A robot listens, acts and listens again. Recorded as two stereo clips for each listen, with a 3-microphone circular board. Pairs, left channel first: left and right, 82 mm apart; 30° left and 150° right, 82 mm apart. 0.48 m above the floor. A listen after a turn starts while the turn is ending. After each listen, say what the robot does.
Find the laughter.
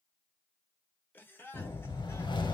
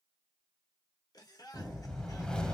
Turn 35° left.
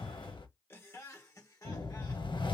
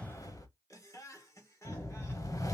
Turn 65° left.
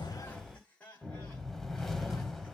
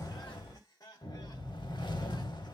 Turn 20° left.
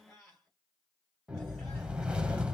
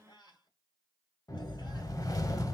Turn 10° left.
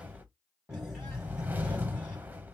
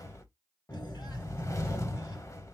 Keep listening.
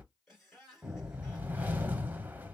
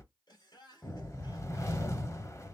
Facing the laughter.